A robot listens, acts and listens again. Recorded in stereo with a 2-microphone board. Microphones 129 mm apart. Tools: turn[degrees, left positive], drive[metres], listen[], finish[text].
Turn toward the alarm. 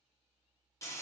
Action: listen[]
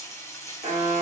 Thought: The alarm: about 70° right or 110° right.
Action: turn[-70]
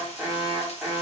Action: finish[Found it: an alarm, straight ahead, 1 to 2 m away.]